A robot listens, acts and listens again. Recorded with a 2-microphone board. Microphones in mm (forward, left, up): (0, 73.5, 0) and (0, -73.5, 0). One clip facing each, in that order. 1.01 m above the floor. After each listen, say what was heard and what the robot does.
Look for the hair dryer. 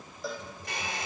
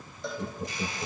The hair dryer: about 70° left or 110° left. Turn 70° left.
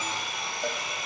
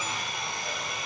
Facing the hair dryer.